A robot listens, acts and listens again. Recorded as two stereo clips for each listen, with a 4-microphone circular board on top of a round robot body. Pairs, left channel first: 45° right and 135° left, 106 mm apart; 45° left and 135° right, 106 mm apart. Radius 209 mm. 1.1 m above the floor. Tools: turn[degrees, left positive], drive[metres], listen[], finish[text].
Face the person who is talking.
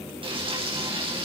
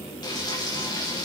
Action: listen[]
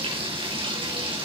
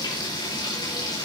Action: listen[]
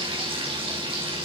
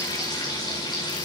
Action: finish[I can't make out anyone speaking to turn to.]